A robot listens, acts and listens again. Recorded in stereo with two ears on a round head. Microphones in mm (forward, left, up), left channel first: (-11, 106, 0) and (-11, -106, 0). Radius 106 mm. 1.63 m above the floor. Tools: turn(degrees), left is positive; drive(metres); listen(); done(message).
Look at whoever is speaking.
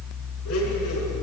listen()
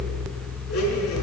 listen()
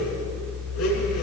done("I can't make out anyone speaking to turn to.")